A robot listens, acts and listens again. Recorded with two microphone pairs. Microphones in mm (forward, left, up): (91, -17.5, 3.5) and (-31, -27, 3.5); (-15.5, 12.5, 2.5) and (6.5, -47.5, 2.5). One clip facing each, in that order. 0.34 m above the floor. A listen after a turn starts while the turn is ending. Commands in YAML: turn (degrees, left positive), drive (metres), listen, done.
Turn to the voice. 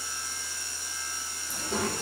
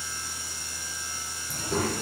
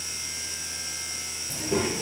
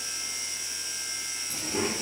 turn: 90
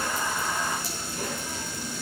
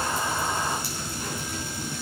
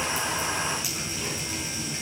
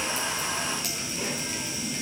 turn: -20
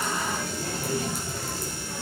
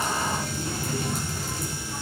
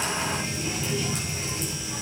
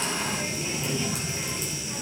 done: "Facing the child speaking."